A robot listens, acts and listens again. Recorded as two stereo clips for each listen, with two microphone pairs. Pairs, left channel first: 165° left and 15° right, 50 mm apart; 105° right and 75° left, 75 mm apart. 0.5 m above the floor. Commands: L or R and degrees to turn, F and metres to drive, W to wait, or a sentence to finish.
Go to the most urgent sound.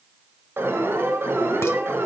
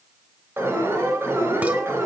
L20
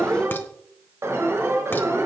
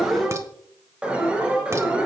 F1.0
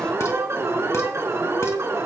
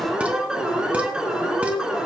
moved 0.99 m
F1.0
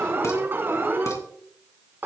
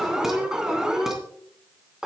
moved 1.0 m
F1.0
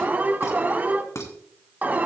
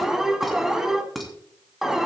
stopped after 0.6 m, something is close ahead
I am next to the alarm.